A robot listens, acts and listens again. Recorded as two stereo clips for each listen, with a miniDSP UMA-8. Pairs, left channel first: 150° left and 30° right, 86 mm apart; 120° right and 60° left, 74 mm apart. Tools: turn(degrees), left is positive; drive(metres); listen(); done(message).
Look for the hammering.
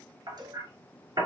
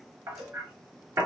turn(degrees=10)
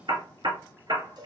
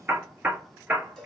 done("Facing the hammering, 1 to 2 m away.")